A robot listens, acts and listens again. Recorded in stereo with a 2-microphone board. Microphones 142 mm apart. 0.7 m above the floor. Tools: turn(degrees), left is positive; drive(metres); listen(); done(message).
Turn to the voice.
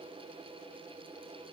listen()
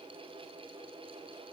listen()
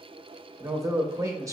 turn(degrees=-20)
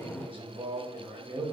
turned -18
turn(degrees=-145)
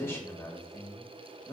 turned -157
turn(degrees=20)
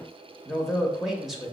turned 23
done("Facing the man speaking.")